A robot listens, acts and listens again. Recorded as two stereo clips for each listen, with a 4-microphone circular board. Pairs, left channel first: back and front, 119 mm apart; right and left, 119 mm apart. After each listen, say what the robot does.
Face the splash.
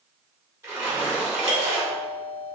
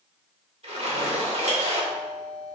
Turn 65° left.
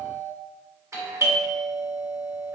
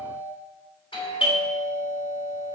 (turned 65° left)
Facing where the splash came from. I can't hear it now.